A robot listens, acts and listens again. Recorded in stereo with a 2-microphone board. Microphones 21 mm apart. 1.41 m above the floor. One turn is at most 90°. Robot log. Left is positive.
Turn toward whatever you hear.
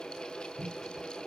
cmd idle
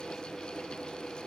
cmd idle
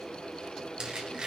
note: The squeak: about 55° right or 125° right.
cmd yaw -55
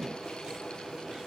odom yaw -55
cmd idle
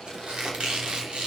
note: So it is at 65° right.
cmd yaw -65
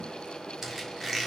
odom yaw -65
note: The squeak is now 15° right.
cmd yaw -15
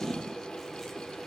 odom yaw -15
cmd idle
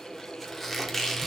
end: Facing the squeak, 2 to 4 m away.